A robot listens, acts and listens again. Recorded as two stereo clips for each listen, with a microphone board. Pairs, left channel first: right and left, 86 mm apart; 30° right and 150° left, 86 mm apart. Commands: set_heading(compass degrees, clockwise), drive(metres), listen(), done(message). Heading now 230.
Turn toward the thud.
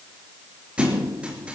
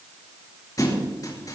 set_heading(215)
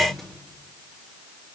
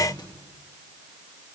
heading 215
done("Facing where the thud came from. I can't hear it now.")